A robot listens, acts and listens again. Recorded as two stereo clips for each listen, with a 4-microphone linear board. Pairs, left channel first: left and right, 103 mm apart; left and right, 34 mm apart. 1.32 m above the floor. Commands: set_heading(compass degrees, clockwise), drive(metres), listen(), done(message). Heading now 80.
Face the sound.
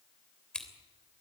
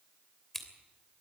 set_heading(50)
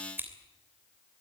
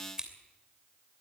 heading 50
set_heading(70)
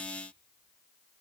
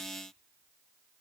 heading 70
listen()
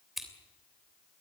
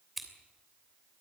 done("Found it: scissors, straight ahead.")